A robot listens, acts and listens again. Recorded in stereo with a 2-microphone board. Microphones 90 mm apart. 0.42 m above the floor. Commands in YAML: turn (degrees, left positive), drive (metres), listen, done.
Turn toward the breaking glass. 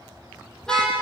listen: true
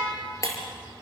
turn: 40
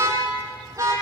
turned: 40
listen: true
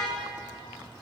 done: "I heard breaking glass, but can't make it out now. It was about straight ahead or 100° left."